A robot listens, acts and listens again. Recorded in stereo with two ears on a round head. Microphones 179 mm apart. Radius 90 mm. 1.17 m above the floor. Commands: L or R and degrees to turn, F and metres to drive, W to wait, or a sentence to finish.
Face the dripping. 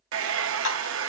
L90
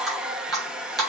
Facing the dripping.